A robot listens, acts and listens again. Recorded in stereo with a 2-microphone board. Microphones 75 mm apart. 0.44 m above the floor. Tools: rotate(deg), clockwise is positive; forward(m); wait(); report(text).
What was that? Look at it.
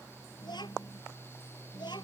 rotate(-90)
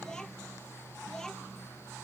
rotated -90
report("Facing the child speaking.")